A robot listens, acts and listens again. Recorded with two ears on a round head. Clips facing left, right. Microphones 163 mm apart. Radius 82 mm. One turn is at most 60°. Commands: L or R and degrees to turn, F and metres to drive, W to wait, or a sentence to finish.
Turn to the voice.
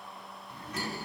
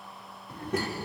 R55
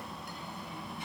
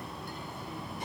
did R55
R35
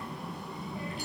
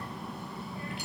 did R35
L20
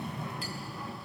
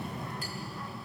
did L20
Found it: a child speaking, straight ahead.